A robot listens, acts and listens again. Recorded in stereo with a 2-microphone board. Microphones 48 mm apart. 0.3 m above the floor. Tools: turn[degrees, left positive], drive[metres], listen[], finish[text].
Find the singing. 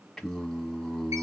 Action: turn[30]
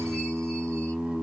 Thought: So it is at 20° right.
Action: turn[-20]
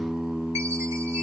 Thought: The singing is now 10° right.
Action: turn[-10]
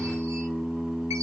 Action: finish[Found it: singing, straight ahead.]